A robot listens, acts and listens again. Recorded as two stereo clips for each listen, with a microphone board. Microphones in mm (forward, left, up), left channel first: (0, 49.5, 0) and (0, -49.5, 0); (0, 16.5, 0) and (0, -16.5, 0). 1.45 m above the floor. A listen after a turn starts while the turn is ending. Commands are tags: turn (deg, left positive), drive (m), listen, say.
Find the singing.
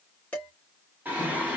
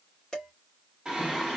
<turn deg="-15"/>
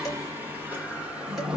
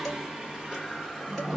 <turn deg="-30"/>
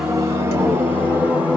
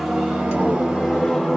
<turn deg="-30"/>
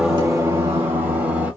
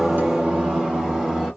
<turn deg="-20"/>
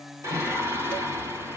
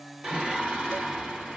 <turn deg="-25"/>
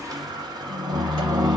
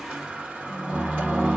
<turn deg="-130"/>
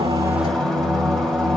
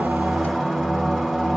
<say>Facing the singing, 1 to 2 m away.</say>